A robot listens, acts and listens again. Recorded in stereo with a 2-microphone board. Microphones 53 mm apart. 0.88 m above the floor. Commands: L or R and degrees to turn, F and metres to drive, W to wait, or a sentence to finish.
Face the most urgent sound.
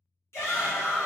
L55
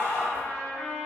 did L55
L25
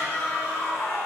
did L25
Facing the shout.